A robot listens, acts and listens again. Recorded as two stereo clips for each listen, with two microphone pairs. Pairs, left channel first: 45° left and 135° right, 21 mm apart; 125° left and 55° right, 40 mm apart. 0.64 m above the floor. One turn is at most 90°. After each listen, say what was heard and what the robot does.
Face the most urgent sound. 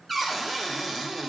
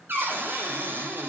Keep listening.
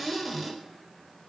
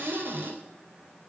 Keep listening.
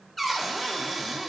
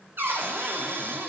I can't make out anything urgent, only a cupboard door.